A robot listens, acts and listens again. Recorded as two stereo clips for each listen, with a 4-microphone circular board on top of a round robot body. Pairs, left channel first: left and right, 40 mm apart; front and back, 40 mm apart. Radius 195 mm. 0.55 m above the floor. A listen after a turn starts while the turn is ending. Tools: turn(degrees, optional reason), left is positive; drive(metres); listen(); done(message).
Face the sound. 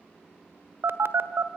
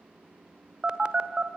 turn(degrees=-115, reason="The phone buzzing: 115° right.")
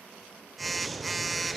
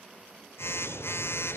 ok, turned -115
done("Found it: a phone buzzing, straight ahead.")